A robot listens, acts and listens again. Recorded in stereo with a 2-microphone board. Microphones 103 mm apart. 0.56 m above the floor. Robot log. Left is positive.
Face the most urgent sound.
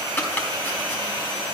cmd idle
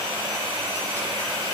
cmd idle
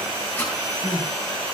note: The crying: about 30° left or 150° left.
cmd yaw +30
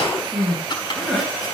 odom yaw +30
end: Facing the crying, over 4 m away.